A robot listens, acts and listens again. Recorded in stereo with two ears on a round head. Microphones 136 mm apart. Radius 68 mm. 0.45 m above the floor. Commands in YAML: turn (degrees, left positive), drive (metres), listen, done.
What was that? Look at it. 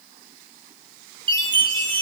turn: -30
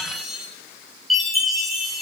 done: "Facing the chime, over 4 m away."